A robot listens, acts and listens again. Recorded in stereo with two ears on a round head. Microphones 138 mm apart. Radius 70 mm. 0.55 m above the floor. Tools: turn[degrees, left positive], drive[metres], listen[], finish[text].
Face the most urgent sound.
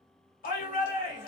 Thought: The shout: about 60° left or 120° left.
Action: turn[60]
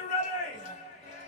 Thought: So it is at 50° left.
Action: turn[50]
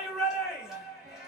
Action: finish[Found it: a shout, straight ahead, 1 to 2 m away.]